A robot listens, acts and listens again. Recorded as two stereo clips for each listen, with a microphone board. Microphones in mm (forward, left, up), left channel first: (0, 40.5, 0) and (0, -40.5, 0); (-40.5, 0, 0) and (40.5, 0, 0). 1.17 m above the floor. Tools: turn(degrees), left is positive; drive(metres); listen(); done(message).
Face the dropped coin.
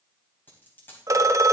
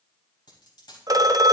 turn(degrees=155)
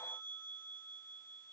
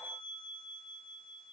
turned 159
done("I heard a dropped coin from this way, but can't make it out now.")